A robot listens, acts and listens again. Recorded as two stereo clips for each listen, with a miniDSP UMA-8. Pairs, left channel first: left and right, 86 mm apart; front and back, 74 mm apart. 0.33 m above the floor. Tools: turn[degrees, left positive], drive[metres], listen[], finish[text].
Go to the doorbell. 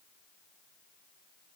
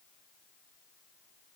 Action: listen[]
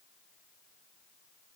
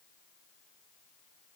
Action: listen[]
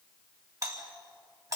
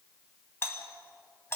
Thought: The doorbell: 50° right.
Action: turn[-50]
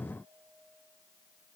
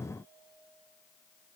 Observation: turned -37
Thought: Nothing new. It was at 15° right.
Action: turn[-15]
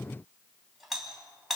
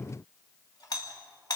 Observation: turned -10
Action: drive[1.0]
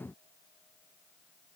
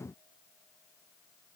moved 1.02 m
Action: listen[]
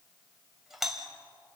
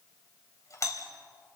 Action: drive[1.0]
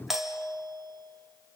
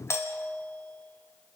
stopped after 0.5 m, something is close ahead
Action: finish[I am next to the doorbell.]